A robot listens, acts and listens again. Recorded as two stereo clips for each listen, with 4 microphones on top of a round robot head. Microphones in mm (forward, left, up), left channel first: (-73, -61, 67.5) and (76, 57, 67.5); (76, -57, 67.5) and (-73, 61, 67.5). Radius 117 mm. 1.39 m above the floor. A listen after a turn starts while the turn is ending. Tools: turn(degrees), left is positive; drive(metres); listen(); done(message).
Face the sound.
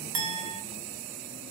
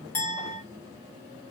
turn(degrees=40)
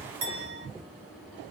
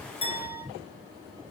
listen()
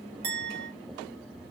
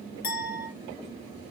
done("Found it: a clink, straight ahead, under 1 m away.")